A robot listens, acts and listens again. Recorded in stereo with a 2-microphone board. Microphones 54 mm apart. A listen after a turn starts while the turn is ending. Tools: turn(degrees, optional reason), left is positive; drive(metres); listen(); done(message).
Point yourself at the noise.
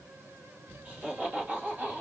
turn(degrees=-30, reason="The laughter: about 30° right or 150° right.")
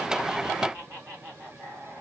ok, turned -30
turn(degrees=-125, reason="So it is at 125° right.")
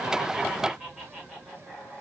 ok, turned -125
done("Found it: laughter, straight ahead, over 4 m away.")